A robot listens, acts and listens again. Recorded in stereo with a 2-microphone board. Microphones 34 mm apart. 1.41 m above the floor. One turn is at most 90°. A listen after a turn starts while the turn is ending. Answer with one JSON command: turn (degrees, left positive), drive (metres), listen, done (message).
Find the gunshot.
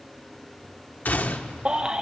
{"turn": 60}
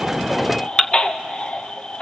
{"listen": true}
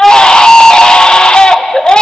{"done": "I heard a gunshot, but can't make it out now. It was about straight ahead or 60° left."}